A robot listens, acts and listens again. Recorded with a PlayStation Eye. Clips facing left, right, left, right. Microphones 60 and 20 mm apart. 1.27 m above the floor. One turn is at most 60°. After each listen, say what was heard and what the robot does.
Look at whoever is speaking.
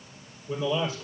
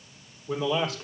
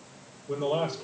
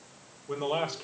The man speaking: about 70° right or 110° right. Turn 60° right.
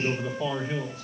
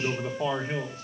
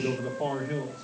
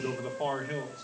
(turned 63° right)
So it is at 40° right. Turn 40° right.
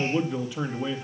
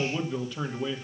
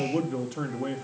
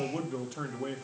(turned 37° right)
The man speaking is now 10° left. Turn 10° left.
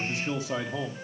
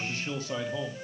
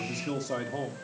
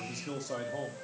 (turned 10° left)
The man speaking is now 20° left. Turn 20° left.
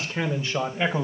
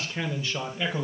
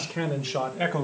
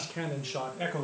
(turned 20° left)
The man speaking is now 30° left. Turn 30° left.
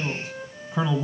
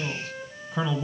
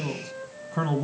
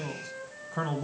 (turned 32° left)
Found it: a man speaking, straight ahead.